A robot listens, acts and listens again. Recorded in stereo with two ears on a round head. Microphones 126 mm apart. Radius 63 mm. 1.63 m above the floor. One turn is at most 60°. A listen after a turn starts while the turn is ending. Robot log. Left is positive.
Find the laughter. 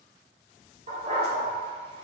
cmd idle
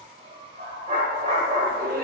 note: The laughter: about 65° right or 115° right.
cmd yaw -60
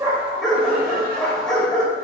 cmd idle
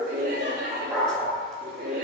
note: So it is at 75° right.
cmd yaw -60
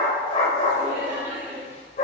note: The laughter is now 20° right.
cmd yaw -20
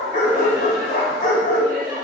end: Found it: laughter, straight ahead.